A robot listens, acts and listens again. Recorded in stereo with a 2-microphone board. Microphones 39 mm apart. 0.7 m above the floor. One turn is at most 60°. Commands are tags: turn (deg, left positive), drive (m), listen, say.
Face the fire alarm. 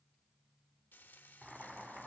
<listen/>
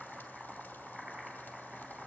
<listen/>
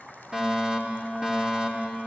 <turn deg="-25"/>
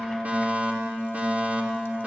<turn deg="-60"/>
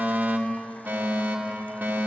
<turn deg="-60"/>
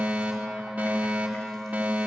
<turn deg="-50"/>
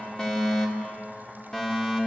<turn deg="20"/>
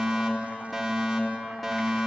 <say>Found it: a fire alarm, straight ahead.</say>